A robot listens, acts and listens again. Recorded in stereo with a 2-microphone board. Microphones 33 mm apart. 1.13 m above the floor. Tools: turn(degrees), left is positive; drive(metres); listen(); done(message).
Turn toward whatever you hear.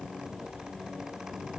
listen()
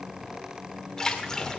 turn(degrees=20)
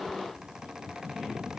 listen()
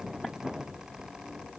done("I heard a splash, but can't make it out now. It was about straight ahead or 140° left.")